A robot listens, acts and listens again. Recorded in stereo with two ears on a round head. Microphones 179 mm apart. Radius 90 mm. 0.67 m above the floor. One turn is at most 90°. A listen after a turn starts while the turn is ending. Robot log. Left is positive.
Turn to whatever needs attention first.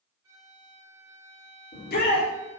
note: The shout: about 50° left or 130° left.
cmd yaw +50
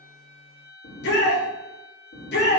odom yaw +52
note: So it is at 70° left.
cmd yaw +70
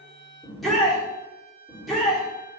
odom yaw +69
end: Found it: a shout, straight ahead, 1 to 2 m away.